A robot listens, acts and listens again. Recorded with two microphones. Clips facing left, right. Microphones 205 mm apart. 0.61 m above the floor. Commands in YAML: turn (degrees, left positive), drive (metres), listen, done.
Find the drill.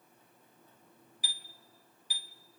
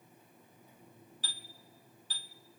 listen: true
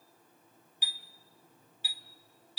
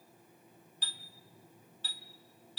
listen: true
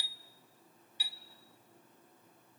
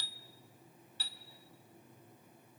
done: "I can't make out a drill, only a chime."